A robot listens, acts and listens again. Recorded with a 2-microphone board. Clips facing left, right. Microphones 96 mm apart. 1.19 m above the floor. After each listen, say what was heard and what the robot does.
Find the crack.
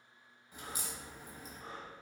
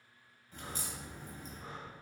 Turn 30° left.
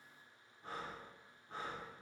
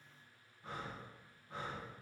Keep listening.
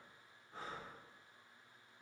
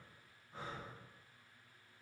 I heard a crack, but can't make it out now. It was about 15° right or 135° left.